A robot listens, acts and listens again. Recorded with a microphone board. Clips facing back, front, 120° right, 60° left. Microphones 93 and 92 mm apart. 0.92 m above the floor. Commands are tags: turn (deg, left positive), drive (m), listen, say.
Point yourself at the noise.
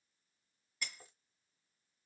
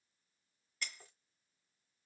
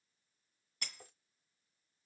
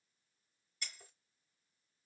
<turn deg="-100"/>
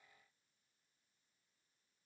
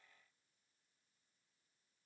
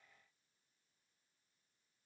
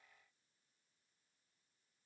<say>Facing where the breaking glass came from. I can't hear it now.</say>